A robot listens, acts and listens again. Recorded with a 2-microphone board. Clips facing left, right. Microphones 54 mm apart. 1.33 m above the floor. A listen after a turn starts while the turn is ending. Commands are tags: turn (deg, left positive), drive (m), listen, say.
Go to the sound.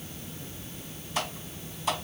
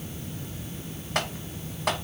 <turn deg="-65"/>
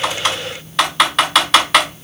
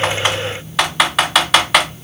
<drive m="1.0"/>
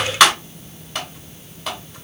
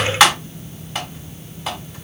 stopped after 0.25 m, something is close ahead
<turn deg="-10"/>
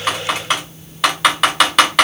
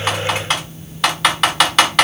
<say>Something is in my way. I am facing the typing on a keyboard but have not reached it.</say>